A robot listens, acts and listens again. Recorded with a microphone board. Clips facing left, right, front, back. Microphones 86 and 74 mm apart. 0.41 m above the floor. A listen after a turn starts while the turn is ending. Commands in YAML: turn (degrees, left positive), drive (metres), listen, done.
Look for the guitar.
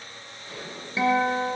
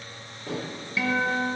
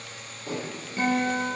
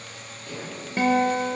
turn: 155
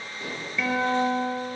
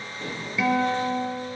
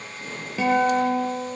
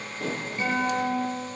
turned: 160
done: "Facing the guitar."